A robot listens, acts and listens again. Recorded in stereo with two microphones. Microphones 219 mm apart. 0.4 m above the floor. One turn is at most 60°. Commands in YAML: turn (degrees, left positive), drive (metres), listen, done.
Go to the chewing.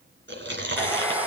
turn: -55
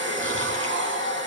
listen: true
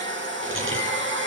listen: true
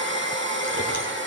done: "I heard chewing, but can't make it out now. It was about straight ahead or 70° right. I did not reach it."